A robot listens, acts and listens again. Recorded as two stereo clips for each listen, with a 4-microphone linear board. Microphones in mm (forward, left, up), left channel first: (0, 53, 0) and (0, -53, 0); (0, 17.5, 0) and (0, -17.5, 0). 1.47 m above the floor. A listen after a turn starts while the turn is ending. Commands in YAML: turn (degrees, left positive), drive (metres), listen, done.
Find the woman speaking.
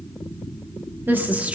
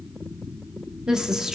turn: -30
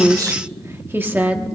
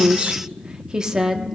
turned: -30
turn: -30
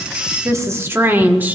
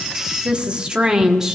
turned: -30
turn: -15
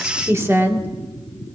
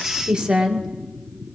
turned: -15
turn: -25
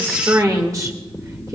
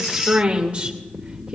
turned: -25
turn: -145
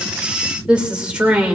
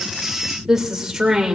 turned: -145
turn: -10
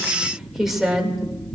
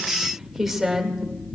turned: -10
done: "Found it: a woman speaking, straight ahead."